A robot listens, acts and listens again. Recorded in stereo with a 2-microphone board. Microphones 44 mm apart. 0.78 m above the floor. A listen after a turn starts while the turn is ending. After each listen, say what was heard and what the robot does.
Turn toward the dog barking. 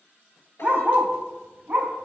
The dog barking: about 55° right or 125° right. Turn 55° right.
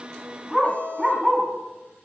So it is at 10° right. Turn 10° right.
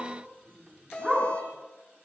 Facing the dog barking, 2 to 4 m away.